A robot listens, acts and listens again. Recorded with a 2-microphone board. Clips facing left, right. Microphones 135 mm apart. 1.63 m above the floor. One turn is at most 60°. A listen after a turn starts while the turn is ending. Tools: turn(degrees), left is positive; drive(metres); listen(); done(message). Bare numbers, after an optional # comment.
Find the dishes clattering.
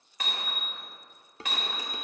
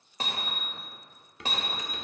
# The dishes clattering: about 30° left or 150° left.
turn(30)
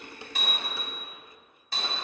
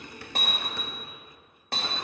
listen()
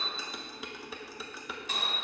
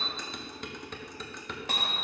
done("Found it: dishes clattering, straight ahead.")